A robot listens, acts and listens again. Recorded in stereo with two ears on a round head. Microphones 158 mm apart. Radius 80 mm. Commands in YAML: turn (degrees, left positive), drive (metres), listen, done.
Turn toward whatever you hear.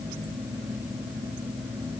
listen: true
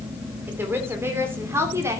turn: -15
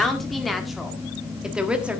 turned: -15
turn: -30
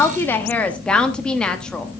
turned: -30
done: "Found it: a woman speaking, straight ahead, 1 to 2 m away."